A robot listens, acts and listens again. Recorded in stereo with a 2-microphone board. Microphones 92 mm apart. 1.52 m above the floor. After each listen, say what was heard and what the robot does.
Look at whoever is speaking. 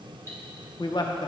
The man speaking: about 55° left or 125° left. Turn 55° left.
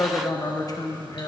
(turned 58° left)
So it is at 50° left. Turn 50° left.
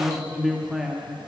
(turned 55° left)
Found it: a man speaking, straight ahead, under 1 m away.